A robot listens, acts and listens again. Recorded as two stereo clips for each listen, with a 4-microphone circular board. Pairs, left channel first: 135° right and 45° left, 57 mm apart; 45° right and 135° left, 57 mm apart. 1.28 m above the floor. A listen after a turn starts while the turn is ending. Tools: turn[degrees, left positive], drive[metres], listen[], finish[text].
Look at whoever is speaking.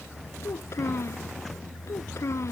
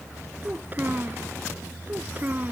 Thought: The child speaking: 170° right.
Action: turn[-170]
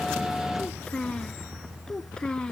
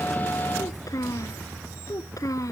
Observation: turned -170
Thought: The child speaking is now 60° right.
Action: turn[-60]
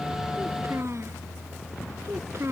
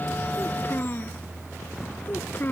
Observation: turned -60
Action: finish[Facing the child speaking.]